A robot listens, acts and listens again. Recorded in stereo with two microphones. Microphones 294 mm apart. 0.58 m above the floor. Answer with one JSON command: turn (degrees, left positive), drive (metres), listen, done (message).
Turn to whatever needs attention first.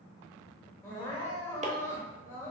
{"turn": 30}
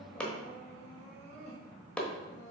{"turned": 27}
{"turn": 145}
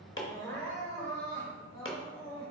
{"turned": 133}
{"turn": 10}
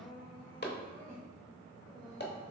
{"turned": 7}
{"done": "Found it: crying, straight ahead."}